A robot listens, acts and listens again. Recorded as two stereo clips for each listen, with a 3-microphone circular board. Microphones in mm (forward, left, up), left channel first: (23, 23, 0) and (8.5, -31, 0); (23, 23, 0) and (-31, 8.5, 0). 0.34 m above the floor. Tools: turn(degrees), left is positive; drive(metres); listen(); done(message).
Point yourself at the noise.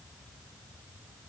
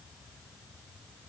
listen()
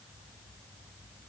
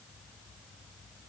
listen()
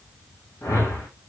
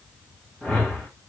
turn(degrees=85)
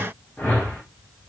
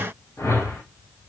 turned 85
turn(degrees=15)
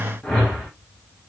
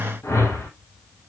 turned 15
done("Found it: a whoosh, straight ahead.")